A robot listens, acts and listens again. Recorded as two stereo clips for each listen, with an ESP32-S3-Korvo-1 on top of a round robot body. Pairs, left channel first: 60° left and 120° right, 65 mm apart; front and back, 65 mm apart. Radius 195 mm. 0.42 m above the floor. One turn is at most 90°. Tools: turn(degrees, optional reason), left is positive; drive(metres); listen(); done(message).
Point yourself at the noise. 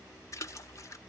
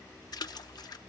turn(degrees=15, reason="The splash: 15° left.")
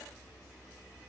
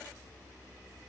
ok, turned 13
done("Facing where the splash came from. I can't hear it now.")